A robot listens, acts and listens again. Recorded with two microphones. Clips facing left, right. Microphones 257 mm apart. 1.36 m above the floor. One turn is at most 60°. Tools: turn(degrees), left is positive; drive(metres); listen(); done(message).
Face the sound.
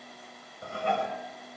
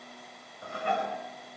turn(degrees=25)
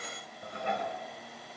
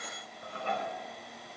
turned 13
turn(degrees=15)
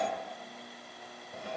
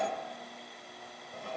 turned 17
done("Facing the dishes clattering.")